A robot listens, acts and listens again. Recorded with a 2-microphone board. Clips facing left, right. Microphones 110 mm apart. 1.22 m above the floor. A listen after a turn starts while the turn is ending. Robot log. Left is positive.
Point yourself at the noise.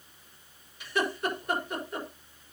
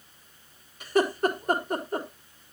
note: The laughter: about 40° right or 140° right.
cmd yaw -40
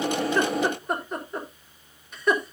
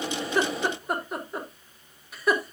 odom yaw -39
end: Found it: laughter, straight ahead.